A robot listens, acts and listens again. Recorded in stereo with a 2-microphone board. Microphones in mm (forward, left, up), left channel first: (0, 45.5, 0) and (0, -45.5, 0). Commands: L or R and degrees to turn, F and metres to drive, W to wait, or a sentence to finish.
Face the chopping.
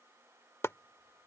L30
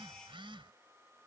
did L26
W
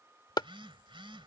L120
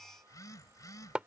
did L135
R15
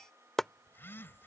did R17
Facing the chopping.